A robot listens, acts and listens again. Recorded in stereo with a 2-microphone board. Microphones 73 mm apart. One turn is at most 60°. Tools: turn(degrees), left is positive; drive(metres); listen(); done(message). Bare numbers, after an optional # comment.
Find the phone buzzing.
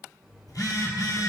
# The phone buzzing: about 60° left or 120° left.
turn(60)
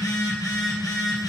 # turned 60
# So it is at 60° left.
turn(60)
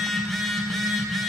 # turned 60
done("Facing the phone buzzing, 2 to 4 m away.")